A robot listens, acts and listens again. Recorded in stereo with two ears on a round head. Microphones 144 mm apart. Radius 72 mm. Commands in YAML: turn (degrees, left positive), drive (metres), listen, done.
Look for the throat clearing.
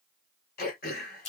turn: 60
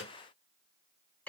turn: 10
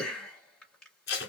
done: "Facing the throat clearing, 1 to 2 m away."